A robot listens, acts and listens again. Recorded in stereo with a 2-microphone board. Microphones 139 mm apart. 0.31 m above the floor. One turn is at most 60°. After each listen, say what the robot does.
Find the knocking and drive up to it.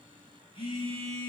Keep listening.
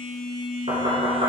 Turn 50° right.
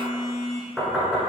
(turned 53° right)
Drive 1.0 m forward.
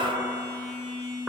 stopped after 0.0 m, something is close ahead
Keep listening.
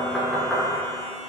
Something is in my way. I am facing the knocking but have not reached it.